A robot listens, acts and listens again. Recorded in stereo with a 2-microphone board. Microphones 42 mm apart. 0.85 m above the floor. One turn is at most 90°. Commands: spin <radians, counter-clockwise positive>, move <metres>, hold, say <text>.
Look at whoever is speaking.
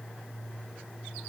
hold
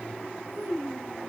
spin -1.05
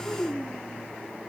spin -1.13
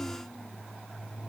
hold
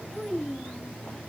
say Found it: a child speaking, straight ahead, 2 to 4 m away.